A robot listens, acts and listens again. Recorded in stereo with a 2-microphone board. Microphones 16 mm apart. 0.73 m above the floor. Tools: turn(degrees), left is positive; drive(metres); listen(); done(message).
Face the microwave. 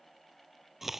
listen()
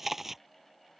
listen()
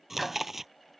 turn(degrees=-30)
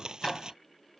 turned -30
turn(degrees=20)
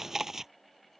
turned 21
listen()
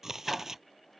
listen()
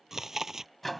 done("Facing the microwave.")